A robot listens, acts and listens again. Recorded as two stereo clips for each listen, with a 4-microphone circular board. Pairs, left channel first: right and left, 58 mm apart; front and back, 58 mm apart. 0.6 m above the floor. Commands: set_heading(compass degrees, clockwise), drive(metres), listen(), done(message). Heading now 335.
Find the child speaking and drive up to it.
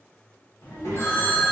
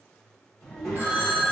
set_heading(60)
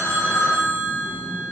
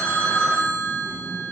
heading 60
set_heading(75)
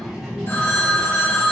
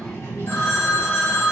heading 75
drive(1.0)
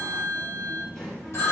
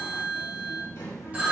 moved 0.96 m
set_heading(85)
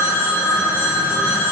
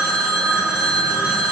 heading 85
listen()
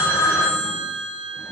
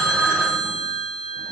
listen()
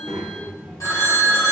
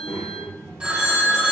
drive(1.0)
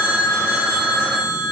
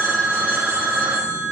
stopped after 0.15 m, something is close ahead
listen()
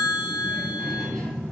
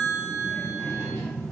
set_heading(95)
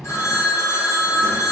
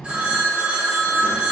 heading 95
done("Arrived at the child speaking, straight ahead.")